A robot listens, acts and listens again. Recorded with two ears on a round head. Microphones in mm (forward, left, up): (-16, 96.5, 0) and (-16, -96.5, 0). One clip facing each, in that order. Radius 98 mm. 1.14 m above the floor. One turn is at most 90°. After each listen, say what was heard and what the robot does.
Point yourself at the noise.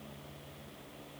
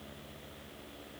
Keep listening.
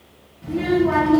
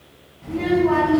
The child speaking: about 20° left or 160° left. Turn 20° left.
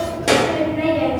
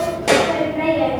The child speaking: about 25° left or 155° left. Turn 25° left.
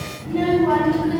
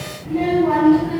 The child speaking: about 20° left or 160° left. Turn 20° left.
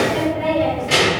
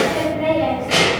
The child speaking: about 20° left or 160° left. Turn 20° left.
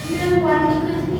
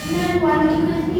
Found it: a child speaking, straight ahead.